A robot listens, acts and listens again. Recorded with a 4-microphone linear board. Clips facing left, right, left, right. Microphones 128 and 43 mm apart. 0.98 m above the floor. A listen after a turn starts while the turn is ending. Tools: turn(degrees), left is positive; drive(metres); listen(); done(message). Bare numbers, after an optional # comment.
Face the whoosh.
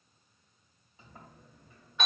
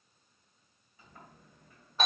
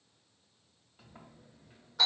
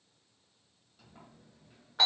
listen()
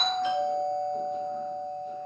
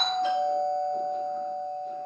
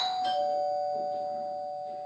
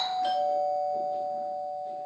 listen()
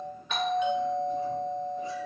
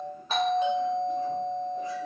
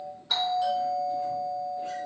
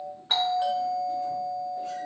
done("I can't make out a whoosh to turn to.")